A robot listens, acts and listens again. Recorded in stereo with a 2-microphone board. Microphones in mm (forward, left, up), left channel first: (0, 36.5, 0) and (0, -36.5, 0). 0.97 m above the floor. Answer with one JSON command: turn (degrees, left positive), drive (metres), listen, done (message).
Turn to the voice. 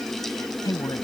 {"turn": 55}
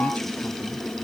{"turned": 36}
{"listen": true}
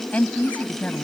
{"turn": 20}
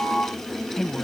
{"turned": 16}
{"done": "Facing the woman speaking."}